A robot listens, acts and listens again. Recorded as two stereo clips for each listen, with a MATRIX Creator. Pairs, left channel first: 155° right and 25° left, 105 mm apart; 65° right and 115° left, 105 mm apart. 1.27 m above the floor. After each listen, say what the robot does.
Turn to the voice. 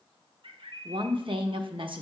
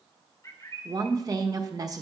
Turn 60° left.
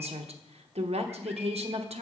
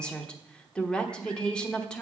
Turn 15° left.
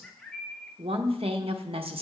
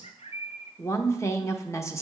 Found it: a woman speaking, straight ahead.